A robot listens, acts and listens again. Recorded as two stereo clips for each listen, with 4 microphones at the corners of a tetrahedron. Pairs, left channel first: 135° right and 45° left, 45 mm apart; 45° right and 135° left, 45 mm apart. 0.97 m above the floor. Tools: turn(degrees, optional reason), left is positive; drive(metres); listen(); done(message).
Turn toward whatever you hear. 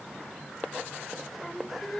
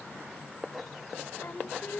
turn(degrees=-60, reason="The singing: 60° right.")
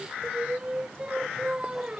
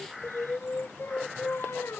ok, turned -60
turn(degrees=-25, reason="The singing is now 25° right.")
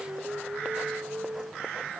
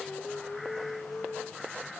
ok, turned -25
done("Facing the singing.")